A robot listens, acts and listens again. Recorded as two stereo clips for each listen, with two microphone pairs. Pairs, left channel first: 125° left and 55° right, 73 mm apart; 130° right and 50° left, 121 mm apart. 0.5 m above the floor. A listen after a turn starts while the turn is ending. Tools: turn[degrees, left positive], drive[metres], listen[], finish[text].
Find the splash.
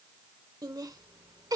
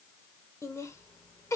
Action: listen[]
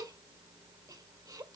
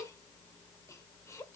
Action: listen[]
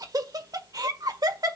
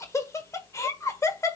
Action: finish[I can't make out a splash, only laughter.]